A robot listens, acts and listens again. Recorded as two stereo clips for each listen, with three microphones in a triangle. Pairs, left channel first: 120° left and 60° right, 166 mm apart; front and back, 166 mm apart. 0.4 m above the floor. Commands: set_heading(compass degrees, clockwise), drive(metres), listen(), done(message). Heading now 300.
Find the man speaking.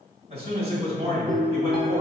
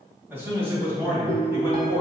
set_heading(45)
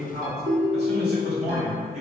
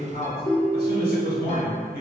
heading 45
set_heading(55)
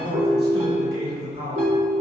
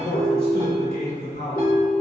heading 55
done("Facing the man speaking.")